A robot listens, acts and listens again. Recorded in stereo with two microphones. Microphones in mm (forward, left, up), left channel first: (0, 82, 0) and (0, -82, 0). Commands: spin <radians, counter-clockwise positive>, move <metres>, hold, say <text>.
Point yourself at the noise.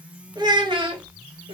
spin -0.61
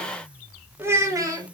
spin -0.35
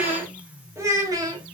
spin -0.44
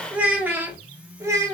spin -0.35
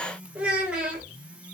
say Facing the child speaking, 1 to 2 m away.